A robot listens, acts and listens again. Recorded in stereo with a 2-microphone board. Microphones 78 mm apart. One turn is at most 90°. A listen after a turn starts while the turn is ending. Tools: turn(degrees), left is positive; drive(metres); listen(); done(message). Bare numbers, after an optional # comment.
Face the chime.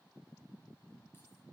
listen()
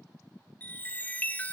# The chime: about 20° left or 160° left.
turn(20)
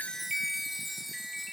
done("Found it: a chime, straight ahead, under 1 m away.")